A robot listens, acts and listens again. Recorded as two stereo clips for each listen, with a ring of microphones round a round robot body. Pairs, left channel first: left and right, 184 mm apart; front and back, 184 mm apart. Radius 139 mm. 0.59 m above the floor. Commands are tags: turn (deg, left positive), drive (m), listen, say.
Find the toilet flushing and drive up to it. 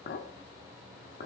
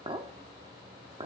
<listen/>
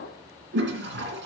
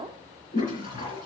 <turn deg="-65"/>
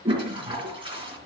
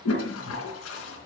<turn deg="-25"/>
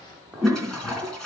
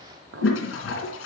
<drive m="1.0"/>
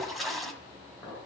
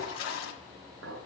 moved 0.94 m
<drive m="1.0"/>
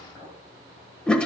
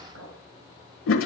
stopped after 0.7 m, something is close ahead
<say>Arrived at the toilet flushing, straight ahead.</say>